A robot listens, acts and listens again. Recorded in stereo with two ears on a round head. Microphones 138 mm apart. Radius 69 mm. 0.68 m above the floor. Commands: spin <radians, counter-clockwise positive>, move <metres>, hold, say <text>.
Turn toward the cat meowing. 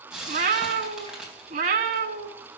spin -0.96
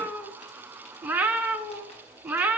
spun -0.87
spin -0.26
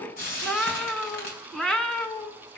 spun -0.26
say Found it: a cat meowing, straight ahead, 1 to 2 m away.